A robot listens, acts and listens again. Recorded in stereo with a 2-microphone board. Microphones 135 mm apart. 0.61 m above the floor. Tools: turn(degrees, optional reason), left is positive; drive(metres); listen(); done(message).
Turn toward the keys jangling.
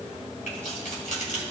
turn(degrees=70, reason="The keys jangling: about 70° left or 110° left.")
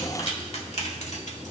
turn(degrees=60, reason="So it is at 60° left.")
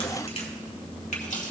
turn(degrees=65, reason="The keys jangling is now 65° left.")
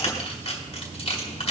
turn(degrees=50, reason="The keys jangling is now 50° left.")
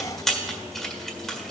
done("Found it: keys jangling, straight ahead, 1 to 2 m away.")